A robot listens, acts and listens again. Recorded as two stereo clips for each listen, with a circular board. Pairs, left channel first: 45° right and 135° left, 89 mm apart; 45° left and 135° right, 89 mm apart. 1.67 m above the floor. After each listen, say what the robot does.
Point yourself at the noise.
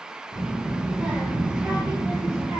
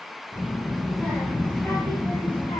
Turn 105° left.
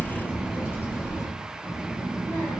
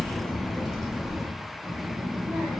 Turn 90° right.
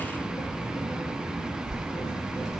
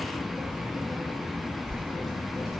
Turn 35° right.
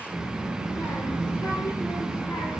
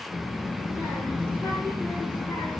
Found it: a child speaking, straight ahead.